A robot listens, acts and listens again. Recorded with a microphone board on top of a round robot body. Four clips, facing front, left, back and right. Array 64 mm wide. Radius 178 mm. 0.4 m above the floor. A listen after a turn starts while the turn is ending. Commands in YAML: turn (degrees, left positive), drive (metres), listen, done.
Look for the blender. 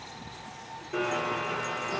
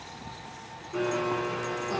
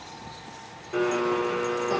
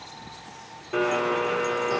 turn: -95
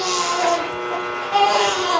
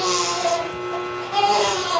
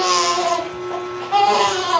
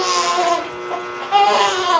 turn: -25
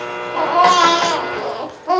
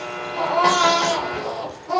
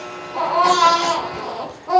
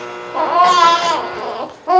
done: "Facing the blender."